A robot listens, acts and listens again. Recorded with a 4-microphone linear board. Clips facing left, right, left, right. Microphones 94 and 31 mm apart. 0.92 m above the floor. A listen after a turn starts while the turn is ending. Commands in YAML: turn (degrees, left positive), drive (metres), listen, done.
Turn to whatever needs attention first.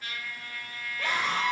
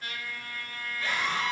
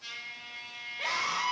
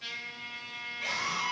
turn: 65
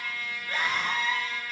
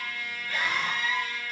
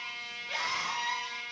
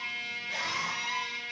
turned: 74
turn: 35
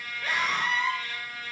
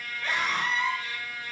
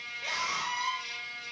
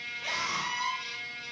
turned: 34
done: "Found it: a scream, straight ahead."